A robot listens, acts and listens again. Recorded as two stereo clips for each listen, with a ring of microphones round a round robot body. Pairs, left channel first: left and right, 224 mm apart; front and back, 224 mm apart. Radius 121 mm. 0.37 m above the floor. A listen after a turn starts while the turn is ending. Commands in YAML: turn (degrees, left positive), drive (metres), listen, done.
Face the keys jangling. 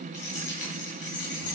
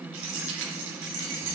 turn: 150
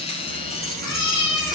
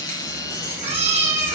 listen: true
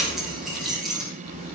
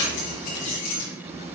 done: "Found it: keys jangling, straight ahead."